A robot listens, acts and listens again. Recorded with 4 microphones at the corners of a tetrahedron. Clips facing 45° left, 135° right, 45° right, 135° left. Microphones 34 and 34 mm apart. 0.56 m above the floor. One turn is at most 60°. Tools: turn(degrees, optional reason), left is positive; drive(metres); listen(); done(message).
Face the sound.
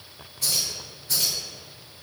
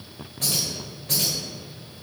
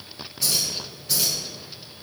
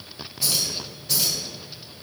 turn(degrees=-60, reason="The keys jangling: 130° right.")
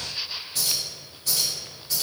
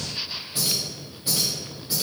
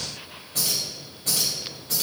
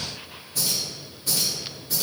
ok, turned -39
turn(degrees=-60, reason="The keys jangling is now 65° right.")
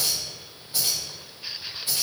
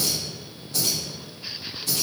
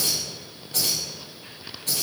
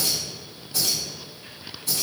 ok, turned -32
turn(degrees=-20, reason="The keys jangling is now 20° right.")
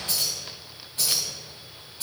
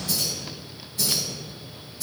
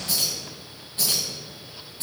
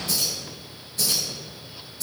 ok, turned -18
done("Found it: keys jangling, straight ahead, 2 to 4 m away.")